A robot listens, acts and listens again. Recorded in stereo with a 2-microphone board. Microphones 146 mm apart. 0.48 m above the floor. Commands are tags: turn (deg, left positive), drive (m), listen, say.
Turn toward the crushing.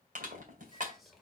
<turn deg="-60"/>
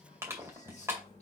<turn deg="-20"/>
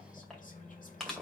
<say>Found it: crushing, straight ahead.</say>